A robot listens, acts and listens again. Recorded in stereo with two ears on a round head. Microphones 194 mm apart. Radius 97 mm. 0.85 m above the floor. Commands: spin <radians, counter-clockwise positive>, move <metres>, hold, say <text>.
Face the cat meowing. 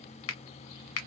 hold
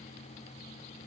hold
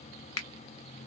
say I can't make out a cat meowing to turn to.